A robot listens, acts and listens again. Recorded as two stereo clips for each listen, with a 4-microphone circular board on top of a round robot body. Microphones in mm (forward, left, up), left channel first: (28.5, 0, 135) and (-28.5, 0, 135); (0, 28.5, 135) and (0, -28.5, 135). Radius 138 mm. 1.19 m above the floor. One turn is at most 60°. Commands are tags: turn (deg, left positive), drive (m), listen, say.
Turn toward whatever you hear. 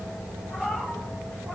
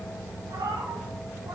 <turn deg="-60"/>
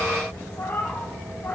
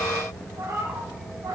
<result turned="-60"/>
<turn deg="-60"/>
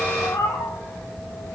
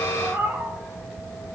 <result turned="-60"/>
<turn deg="-40"/>
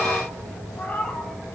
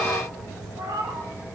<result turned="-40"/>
<turn deg="-60"/>
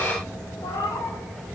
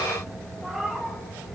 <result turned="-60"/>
<say>Facing the cat meowing.</say>